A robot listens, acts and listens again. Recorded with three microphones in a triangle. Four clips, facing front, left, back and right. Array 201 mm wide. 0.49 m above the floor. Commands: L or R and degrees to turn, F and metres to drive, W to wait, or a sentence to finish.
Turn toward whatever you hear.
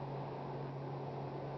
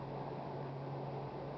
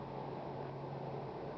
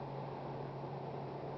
W
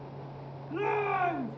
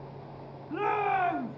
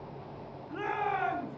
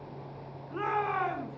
L80
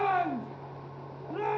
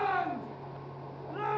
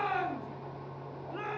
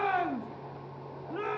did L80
Facing the shout.